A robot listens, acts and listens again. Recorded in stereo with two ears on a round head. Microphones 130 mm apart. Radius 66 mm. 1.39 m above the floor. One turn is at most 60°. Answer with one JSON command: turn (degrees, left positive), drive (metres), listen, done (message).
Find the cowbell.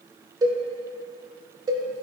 {"turn": -25}
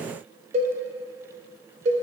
{"turn": -60}
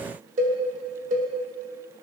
{"turn": -60}
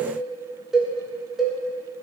{"done": "Facing the cowbell."}